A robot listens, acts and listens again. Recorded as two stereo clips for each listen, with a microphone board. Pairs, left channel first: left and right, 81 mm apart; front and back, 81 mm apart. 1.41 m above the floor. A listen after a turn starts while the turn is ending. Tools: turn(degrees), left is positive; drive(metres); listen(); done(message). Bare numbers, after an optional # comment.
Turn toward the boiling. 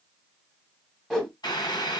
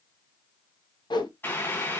# The boiling: 65° left.
turn(65)
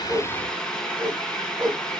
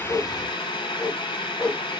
# The boiling is now 10° left.
turn(10)
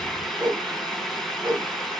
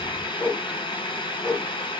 done("Facing the boiling, 1 to 2 m away.")